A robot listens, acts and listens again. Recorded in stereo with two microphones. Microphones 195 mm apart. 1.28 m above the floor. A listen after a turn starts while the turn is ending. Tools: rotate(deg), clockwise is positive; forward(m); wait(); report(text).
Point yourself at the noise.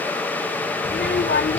rotate(-90)
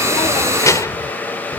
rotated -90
rotate(-15)
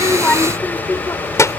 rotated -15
rotate(-15)
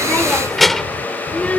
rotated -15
report("Found it: a child speaking, straight ahead.")